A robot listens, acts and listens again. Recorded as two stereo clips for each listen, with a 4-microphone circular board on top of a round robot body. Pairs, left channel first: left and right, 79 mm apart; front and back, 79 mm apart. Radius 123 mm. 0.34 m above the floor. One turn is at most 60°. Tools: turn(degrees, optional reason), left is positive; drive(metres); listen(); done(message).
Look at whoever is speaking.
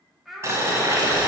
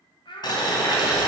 done("Found it: a child speaking, straight ahead, 2 to 4 m away.")